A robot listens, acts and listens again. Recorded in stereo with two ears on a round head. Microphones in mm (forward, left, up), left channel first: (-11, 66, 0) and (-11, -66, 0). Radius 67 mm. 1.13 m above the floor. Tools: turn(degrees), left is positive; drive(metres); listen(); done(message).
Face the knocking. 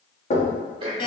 turn(degrees=55)
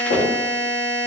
turn(degrees=75)
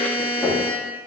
done("Facing the knocking, 1 to 2 m away.")